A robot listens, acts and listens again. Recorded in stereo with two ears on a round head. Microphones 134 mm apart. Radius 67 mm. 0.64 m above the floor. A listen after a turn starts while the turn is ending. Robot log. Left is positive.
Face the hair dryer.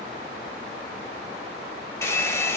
note: The hair dryer: about 20° left or 160° left.
cmd yaw +20
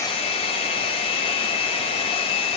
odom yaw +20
note: So it is at 140° left.
cmd yaw +140
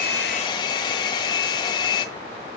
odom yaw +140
note: The hair dryer is now 30° left.
cmd yaw +30
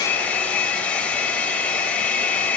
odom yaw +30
note: The hair dryer is now 10° left.
cmd yaw +10
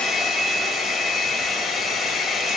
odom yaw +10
end: Found it: a hair dryer, straight ahead.